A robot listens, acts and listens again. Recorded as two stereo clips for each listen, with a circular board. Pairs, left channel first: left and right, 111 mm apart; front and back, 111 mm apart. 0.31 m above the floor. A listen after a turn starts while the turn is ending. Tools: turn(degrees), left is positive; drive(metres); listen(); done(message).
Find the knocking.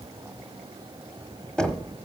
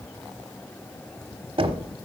turn(degrees=170)
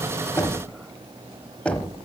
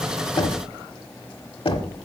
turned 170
turn(degrees=15)
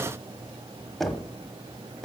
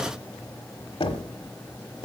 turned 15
done("Found it: knocking, straight ahead, under 1 m away.")